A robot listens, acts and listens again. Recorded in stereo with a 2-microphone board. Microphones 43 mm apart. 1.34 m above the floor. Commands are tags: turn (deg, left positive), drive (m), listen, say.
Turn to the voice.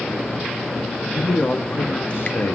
<turn deg="90"/>
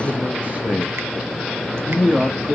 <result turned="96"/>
<turn deg="-55"/>
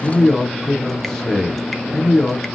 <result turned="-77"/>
<turn deg="10"/>
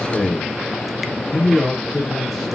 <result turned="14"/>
<say>Facing the man speaking.</say>